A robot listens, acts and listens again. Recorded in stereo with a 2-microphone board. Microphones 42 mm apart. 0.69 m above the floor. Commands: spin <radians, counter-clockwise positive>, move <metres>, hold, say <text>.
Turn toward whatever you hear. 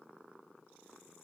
hold
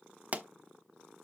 spin -0.61
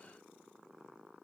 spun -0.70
hold
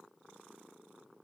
say I heard a pop, but can't make it out now. It was about 5° left or 105° right.